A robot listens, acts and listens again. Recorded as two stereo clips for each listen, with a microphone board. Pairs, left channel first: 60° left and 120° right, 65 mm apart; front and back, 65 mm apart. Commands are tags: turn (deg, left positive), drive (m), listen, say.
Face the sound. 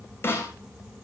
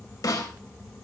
<turn deg="10"/>
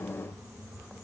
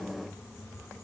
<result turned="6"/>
<listen/>
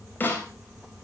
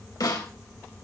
<say>Facing the snare drum.</say>